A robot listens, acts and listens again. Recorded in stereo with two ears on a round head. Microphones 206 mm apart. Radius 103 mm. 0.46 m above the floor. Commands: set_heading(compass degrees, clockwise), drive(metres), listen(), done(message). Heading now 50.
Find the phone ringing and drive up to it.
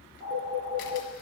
set_heading(65)
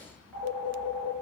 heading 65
drive(1.0)
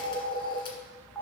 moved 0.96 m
drive(1.0)
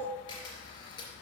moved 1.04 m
listen()
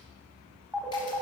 drive(1.0)
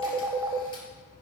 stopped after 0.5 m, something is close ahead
set_heading(80)
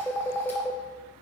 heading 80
done("I am next to the phone ringing.")